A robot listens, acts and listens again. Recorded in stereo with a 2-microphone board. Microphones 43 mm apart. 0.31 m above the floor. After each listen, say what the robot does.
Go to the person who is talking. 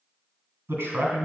Turn 70° right.
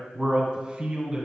Turn 25° right.
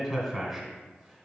Drive 1.0 m forward.
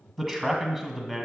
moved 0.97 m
Drive 1.0 m forward.
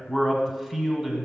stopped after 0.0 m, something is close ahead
I am next to the man speaking.